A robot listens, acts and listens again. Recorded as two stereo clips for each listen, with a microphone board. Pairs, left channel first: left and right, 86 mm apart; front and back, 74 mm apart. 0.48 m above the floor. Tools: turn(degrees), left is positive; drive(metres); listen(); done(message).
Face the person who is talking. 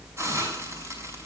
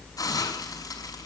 listen()
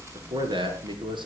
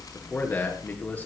turn(degrees=-70)
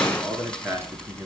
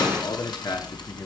turn(degrees=-30)
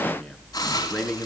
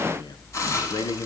done("Facing the man speaking, over 4 m away.")